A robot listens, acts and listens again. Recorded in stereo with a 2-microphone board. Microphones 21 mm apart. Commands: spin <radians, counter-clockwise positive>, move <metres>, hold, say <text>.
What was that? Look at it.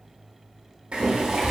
spin -1.05
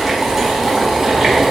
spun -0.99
spin -0.35
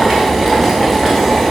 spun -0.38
say Facing the boiling.